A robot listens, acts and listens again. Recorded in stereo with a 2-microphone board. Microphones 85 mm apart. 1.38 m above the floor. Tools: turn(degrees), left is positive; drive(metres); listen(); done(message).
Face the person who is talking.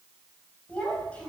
turn(degrees=15)
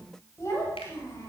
turn(degrees=35)
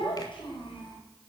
turn(degrees=105)
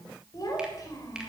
turn(degrees=40)
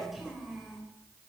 done("Found it: a child speaking, straight ahead.")